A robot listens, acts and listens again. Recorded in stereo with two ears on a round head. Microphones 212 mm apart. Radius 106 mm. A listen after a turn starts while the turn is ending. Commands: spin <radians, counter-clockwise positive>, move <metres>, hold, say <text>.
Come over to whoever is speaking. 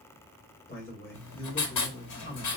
spin 0.70
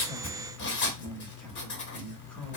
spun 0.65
spin 1.75
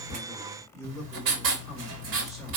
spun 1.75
move 1.0
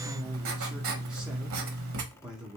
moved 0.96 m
move 1.0
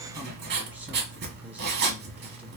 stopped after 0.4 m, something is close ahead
hold
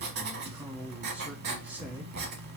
say Arrived at the man speaking, straight ahead.